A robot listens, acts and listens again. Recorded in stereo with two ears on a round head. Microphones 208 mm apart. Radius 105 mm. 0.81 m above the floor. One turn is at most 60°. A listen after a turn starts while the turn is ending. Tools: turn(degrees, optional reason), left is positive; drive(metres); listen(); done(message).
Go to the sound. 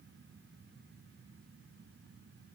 listen()
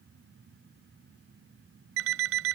turn(degrees=-60, reason="The alarm clock: about 65° right or 115° right.")
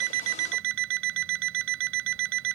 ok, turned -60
turn(degrees=-55, reason="So it is at 55° right.")
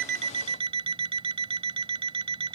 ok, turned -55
turn(degrees=-25, reason="The alarm clock is now 25° right.")
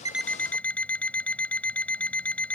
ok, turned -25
drive(metres=1.0)
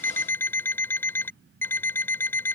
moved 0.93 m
turn(degrees=10, reason="The alarm clock is now 10° left.")
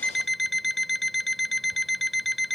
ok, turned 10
drive(metres=1.0)
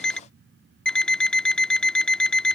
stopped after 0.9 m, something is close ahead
done("I am next to the alarm clock.")